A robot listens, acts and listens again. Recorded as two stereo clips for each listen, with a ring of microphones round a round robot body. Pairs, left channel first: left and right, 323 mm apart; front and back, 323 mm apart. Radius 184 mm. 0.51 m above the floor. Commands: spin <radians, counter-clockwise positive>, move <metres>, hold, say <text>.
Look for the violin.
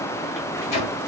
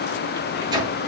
hold
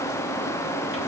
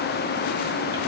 hold
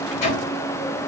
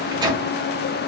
say I can't make out a violin to turn to.